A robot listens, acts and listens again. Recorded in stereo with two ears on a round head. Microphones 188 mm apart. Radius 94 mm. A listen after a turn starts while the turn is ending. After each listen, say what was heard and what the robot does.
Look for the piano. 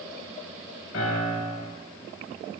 The piano: about 70° left or 110° left. Turn 70° left.
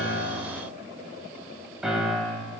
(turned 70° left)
Found it: a piano, straight ahead, over 4 m away.